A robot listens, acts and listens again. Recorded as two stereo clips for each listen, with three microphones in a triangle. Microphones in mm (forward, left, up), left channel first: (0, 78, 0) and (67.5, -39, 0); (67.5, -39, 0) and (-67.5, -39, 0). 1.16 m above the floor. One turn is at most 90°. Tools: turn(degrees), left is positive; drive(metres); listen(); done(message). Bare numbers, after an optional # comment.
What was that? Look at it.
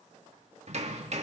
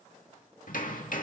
# The hammering: 20° right.
turn(-20)
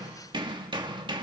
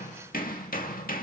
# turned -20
done("Facing the hammering, 2 to 4 m away.")